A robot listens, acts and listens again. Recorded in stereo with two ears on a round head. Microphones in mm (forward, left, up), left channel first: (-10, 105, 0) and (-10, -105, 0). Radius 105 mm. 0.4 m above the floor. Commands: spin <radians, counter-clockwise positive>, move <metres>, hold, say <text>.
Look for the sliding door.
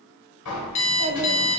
spin 1.57
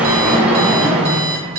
say Found it: a sliding door, straight ahead.